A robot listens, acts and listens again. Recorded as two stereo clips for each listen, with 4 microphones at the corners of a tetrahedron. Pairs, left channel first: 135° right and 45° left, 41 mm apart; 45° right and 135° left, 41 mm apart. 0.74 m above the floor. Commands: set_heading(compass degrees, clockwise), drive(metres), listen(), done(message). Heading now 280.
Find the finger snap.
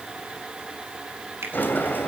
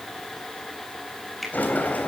set_heading(235)
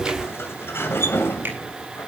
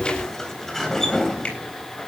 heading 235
listen()
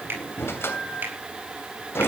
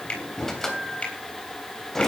set_heading(220)
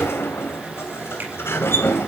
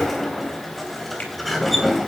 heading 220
listen()
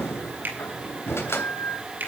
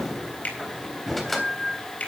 done("Found it: a finger snap, straight ahead.")